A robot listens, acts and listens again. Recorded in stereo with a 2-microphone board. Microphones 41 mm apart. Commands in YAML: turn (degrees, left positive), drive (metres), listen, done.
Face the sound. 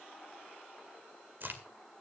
turn: -55
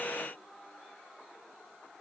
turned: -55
listen: true
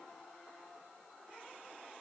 done: "I heard a crack, but can't make it out now. It was about straight ahead or 70° right."